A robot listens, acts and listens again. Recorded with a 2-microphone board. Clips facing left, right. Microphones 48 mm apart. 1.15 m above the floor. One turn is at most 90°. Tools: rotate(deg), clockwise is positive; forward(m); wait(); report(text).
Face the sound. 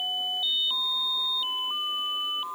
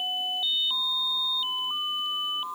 wait()
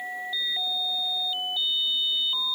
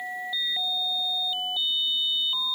wait()
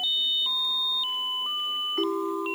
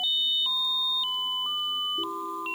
rotate(-90)
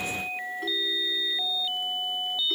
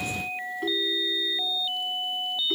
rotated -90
report("Found it: a ringtone, straight ahead.")